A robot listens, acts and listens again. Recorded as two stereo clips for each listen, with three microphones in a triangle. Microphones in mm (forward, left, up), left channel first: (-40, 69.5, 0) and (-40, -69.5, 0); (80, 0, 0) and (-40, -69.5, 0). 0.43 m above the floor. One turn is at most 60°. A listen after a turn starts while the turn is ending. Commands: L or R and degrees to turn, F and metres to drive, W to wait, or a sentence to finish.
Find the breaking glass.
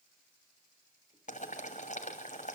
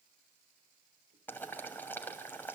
W
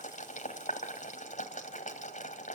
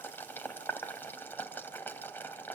W
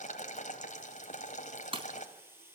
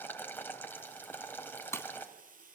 R40
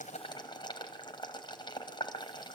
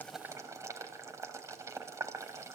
I heard breaking glass from this way, but can't make it out now.